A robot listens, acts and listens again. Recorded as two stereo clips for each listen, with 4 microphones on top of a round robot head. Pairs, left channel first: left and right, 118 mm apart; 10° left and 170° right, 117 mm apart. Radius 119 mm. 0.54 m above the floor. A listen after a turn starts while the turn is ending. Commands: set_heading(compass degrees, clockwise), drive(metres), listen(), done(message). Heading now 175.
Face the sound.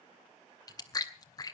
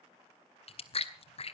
set_heading(140)
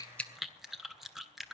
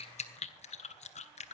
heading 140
done("Found it: chewing, straight ahead.")